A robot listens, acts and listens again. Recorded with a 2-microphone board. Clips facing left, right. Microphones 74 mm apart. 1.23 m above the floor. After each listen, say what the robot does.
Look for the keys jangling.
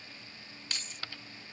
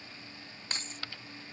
Turn 35° right.
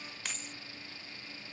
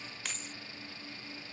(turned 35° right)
Facing the keys jangling.